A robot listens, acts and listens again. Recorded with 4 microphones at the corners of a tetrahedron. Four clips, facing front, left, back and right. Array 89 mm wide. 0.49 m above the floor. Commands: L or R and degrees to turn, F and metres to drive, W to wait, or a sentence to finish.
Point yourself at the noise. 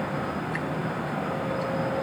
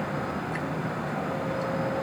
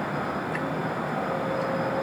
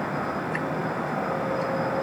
W
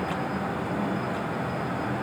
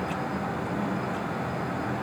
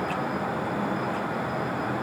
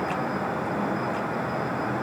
W
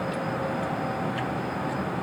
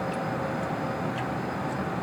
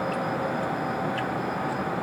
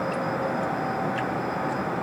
I can't make out anything.